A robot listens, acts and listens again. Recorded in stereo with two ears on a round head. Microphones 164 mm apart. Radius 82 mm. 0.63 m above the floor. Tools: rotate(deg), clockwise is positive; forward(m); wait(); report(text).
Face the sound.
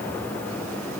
wait()
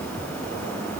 wait()
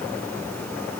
report("I can't make out anything to turn to.")